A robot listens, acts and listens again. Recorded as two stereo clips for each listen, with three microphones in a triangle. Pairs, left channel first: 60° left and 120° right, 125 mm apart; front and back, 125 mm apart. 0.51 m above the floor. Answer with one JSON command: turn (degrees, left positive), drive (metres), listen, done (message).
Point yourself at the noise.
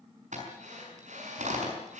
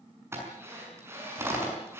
{"turn": -110}
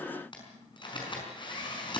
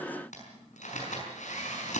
{"turn": 10}
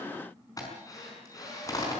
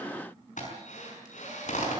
{"done": "Facing the drill, over 4 m away."}